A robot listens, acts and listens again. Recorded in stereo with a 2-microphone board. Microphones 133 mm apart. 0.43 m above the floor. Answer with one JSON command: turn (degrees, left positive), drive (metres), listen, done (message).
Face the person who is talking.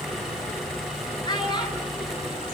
{"turn": 35}
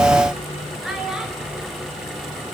{"done": "Facing the child speaking."}